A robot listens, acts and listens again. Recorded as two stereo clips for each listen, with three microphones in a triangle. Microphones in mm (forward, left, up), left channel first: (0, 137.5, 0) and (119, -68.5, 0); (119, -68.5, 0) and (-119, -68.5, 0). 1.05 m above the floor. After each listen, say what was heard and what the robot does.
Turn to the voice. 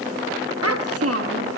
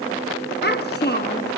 The child speaking: 50° right. Turn 50° right.
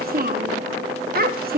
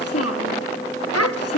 The child speaking is now 10° right. Turn 10° right.
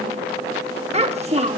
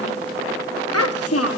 Facing the child speaking, 1 to 2 m away.